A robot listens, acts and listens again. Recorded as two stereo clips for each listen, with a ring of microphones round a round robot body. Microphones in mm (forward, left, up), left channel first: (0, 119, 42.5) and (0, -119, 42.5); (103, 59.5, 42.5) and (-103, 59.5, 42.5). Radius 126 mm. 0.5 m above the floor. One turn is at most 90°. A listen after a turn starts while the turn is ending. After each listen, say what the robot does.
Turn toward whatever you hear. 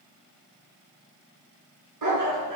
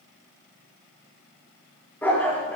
Turn 90° right.
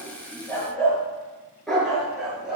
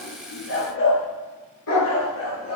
Found it: a dog barking, straight ahead.